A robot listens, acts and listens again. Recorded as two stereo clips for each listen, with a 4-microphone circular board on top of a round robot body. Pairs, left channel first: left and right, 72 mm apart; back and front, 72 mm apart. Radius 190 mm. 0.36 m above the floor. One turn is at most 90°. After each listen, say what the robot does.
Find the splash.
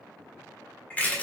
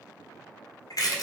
Keep listening.
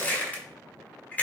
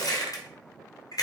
Keep listening.
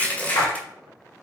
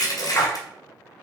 Turn 90° left.
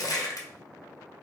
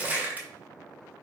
Turn 35° left.
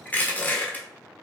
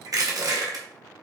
Facing where the splash came from. I can't hear it now.